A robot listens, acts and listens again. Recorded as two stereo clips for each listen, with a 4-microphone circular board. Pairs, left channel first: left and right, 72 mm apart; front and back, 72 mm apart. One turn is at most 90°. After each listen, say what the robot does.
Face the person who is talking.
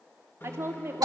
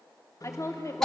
Turn 40° right.
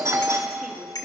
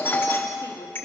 Keep listening.
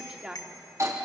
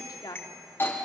Turn 15° right.
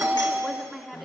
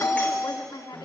Found it: a woman speaking, straight ahead, 2 to 4 m away.